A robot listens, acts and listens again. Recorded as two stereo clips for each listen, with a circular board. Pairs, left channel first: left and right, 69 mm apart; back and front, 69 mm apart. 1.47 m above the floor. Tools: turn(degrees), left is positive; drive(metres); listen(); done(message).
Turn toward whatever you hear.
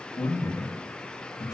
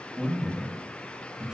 turn(degrees=80)
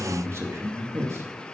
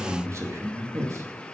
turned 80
turn(degrees=-45)
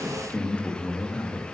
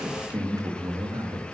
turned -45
turn(degrees=20)
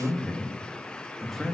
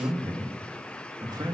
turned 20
done("Found it: a man speaking, straight ahead, 2 to 4 m away.")